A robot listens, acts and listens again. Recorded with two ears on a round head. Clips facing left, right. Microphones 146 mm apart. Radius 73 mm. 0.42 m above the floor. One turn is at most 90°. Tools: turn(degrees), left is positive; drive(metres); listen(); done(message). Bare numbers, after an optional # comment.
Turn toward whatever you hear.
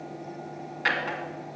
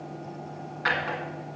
# The drawer: about 30° left or 150° left.
turn(30)
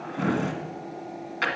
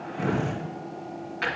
# So it is at 125° left.
turn(90)
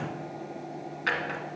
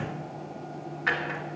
# The drawer is now 35° left.
turn(35)
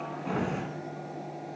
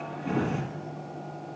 done("Facing the drawer, 1 to 2 m away.")